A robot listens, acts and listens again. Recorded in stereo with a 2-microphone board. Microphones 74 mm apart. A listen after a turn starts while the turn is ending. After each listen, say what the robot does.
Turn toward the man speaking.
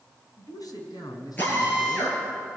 Turn 70° left.
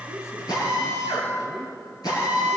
Keep listening.
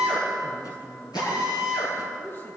Turn 35° left.
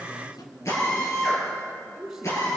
Facing the man speaking.